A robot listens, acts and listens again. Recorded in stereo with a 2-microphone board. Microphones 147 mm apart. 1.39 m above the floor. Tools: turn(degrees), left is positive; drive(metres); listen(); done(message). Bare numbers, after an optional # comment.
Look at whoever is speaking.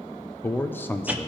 turn(30)
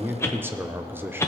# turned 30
# So it is at 15° right.
turn(-15)
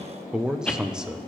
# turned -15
done("Found it: a man speaking, straight ahead, under 1 m away.")